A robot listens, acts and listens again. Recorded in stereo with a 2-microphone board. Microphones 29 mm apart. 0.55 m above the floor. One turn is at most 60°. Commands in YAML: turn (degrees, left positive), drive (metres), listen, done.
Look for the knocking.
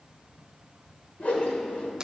listen: true
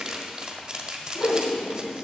listen: true
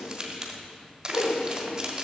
done: "I can't make out knocking, only crumpling and a whoosh."